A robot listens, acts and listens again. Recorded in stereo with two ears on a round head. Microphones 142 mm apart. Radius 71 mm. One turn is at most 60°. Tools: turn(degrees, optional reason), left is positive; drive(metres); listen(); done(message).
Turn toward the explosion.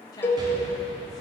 turn(degrees=-30, reason="The explosion: about 30° right or 150° right.")
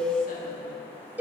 listen()
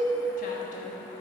done("I heard an explosion, but can't make it out now. It was about straight ahead or 120° right.")